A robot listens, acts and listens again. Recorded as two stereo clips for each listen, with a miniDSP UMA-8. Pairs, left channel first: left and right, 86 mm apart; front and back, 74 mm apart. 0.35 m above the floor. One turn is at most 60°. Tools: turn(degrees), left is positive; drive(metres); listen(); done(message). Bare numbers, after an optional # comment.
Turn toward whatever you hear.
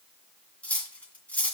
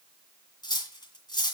# The cutlery clinking: 15° left.
turn(15)
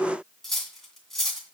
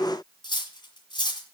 done("Facing the cutlery clinking.")